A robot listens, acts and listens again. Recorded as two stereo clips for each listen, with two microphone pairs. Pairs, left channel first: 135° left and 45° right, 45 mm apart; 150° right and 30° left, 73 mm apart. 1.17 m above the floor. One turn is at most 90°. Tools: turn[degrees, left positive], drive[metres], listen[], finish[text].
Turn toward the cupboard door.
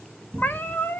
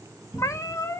Thought: The cupboard door: 55° left.
Action: turn[55]
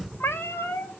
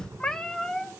Thought: The cupboard door is now 20° left.
Action: turn[20]
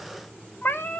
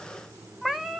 Action: listen[]
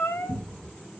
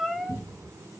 Action: finish[Found it: a cupboard door, straight ahead.]